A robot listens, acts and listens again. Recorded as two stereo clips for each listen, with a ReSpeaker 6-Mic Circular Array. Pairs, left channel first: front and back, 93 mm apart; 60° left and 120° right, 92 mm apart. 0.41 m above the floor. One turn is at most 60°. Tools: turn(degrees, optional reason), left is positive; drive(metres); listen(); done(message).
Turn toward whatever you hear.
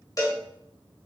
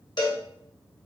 turn(degrees=40, reason="The cowbell: 40° left.")
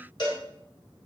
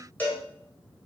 done("Facing the cowbell.")